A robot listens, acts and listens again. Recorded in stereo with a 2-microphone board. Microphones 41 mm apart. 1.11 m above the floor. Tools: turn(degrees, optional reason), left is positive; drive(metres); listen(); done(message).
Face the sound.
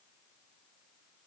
listen()
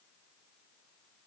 listen()
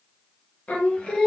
turn(degrees=15, reason="The singing: about 15° left or 165° left.")
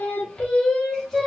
turn(degrees=30)
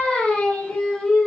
turn(degrees=30)
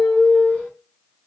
turn(degrees=145, reason="So it is at 145° left.")
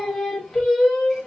turn(degrees=15, reason="The singing is now 15° left.")
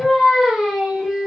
done("Found it: singing, straight ahead, 1 to 2 m away.")